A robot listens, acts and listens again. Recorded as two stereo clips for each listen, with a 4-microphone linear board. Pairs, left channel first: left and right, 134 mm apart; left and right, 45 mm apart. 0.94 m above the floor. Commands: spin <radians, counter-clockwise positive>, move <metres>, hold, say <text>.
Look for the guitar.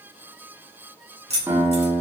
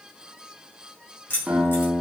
spin -0.35
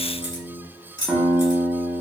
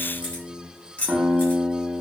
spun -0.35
say Found it: a guitar, straight ahead.